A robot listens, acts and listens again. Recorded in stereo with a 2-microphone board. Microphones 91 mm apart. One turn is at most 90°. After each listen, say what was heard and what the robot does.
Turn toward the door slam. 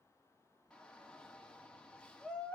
Keep listening.
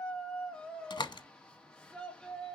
The door slam: about 65° left or 115° left. Turn 65° left.
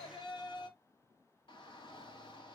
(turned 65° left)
Keep listening.
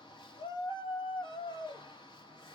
I heard a door slam, but can't make it out now. It was about straight ahead or 50° left.